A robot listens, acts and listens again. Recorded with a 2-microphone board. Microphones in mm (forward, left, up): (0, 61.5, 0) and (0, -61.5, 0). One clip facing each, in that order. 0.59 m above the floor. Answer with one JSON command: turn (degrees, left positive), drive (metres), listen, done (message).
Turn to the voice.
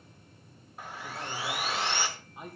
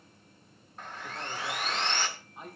{"turn": 30}
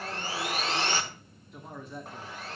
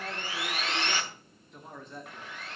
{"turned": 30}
{"turn": 30}
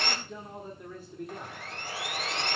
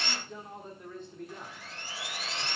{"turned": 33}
{"turn": 30}
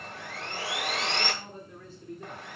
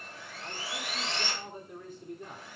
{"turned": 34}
{"turn": -15}
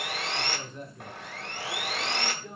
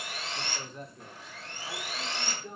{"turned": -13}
{"done": "Found it: a man speaking, straight ahead."}